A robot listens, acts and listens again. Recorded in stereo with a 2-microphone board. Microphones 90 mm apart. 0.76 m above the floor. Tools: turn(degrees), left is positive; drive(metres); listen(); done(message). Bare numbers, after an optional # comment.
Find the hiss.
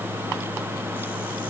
listen()
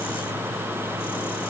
listen()
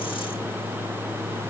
done("I can't make out a hiss to turn to.")